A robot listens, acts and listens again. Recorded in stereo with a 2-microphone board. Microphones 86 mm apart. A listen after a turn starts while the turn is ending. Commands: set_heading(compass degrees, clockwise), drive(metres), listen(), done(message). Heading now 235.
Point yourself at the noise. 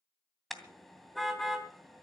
set_heading(205)
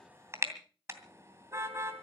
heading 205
set_heading(240)
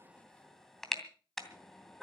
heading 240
done("Found it: a car horn, straight ahead.")